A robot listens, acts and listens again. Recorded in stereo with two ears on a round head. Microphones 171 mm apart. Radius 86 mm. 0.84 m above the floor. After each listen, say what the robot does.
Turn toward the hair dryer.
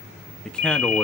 Keep listening.
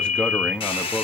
Turn 25° left.
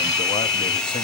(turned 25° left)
Found it: a hair dryer, straight ahead, 1 to 2 m away.